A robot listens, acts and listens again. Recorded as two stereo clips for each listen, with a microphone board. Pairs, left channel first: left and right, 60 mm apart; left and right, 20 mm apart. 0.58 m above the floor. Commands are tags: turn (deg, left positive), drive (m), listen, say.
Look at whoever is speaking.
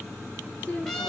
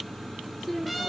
<turn deg="25"/>
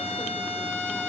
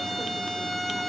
<listen/>
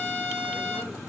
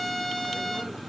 <listen/>
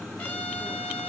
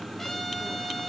<say>I heard a woman speaking, but can't make it out now. It was about straight ahead or 130° left.</say>